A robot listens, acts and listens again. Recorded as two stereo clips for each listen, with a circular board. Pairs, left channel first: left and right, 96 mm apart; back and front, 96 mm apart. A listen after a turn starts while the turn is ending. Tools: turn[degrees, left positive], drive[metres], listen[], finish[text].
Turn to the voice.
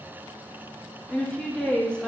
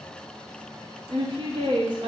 Thought: The woman speaking: 15° left.
Action: turn[15]
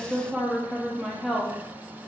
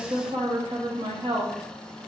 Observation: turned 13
Action: finish[Found it: a woman speaking, straight ahead.]